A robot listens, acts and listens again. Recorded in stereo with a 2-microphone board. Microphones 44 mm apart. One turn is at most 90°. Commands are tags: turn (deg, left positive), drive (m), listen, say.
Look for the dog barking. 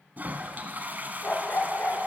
<turn deg="40"/>
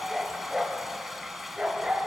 <turn deg="-20"/>
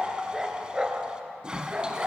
<turn deg="-30"/>
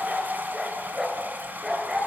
<turn deg="-10"/>
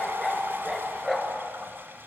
<say>Facing the dog barking, 2 to 4 m away.</say>